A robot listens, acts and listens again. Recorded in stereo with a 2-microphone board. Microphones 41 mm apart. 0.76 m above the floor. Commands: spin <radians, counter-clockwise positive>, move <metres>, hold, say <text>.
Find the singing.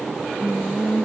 spin 1.57
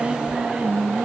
spin -0.52
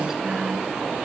hold
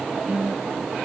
spin -0.44
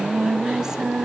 spin -0.26
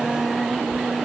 say Found it: singing, straight ahead, 1 to 2 m away.